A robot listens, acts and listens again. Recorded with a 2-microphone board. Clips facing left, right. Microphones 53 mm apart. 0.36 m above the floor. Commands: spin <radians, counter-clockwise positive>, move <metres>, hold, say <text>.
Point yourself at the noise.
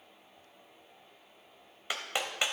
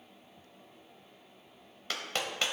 spin 0.52
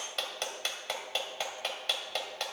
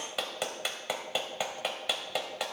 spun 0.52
spin -0.17
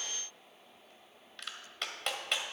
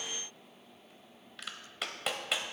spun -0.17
say Facing the clap, 1 to 2 m away.